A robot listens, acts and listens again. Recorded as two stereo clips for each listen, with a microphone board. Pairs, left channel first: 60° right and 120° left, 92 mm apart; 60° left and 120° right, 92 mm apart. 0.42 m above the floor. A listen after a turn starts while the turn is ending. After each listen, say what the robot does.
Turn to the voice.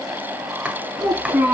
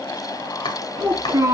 Turn 175° right.
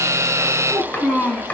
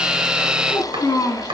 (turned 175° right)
Turn 10° left.
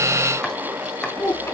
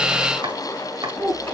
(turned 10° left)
Found it: a child speaking, straight ahead, over 4 m away.